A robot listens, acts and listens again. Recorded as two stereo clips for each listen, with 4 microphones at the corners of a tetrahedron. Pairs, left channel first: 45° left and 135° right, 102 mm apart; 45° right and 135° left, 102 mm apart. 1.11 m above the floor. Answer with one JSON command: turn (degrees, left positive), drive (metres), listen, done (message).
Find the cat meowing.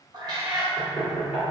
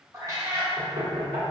{"turn": -175}
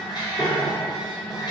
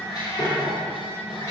{"done": "Facing the cat meowing, 1 to 2 m away."}